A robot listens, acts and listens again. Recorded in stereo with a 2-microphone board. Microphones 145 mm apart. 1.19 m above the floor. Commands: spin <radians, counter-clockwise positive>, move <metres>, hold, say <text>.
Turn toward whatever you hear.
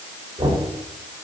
spin -0.52
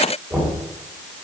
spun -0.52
say Facing the knocking, 2 to 4 m away.